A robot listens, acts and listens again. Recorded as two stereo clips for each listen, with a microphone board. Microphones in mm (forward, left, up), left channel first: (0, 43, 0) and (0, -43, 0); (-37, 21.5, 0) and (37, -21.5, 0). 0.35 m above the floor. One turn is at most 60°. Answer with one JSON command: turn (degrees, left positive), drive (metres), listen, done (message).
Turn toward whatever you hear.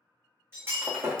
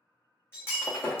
{"turn": -60}
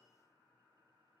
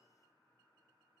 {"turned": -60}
{"turn": -60}
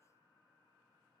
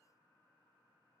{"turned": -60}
{"turn": -30}
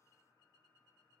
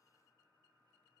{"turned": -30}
{"done": "Facing where the breaking glass came from. I can't hear it now."}